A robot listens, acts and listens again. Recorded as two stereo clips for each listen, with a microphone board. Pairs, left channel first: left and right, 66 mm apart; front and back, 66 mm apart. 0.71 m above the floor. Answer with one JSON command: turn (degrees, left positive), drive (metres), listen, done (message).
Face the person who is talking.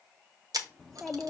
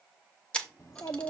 {"done": "Facing the child speaking."}